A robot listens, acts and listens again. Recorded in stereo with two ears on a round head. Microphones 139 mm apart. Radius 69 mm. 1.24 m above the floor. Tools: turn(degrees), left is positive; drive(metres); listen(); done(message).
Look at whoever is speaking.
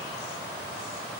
listen()
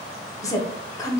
turn(degrees=20)
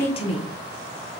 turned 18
turn(degrees=145)
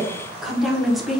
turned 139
done("Facing the woman speaking, under 1 m away.")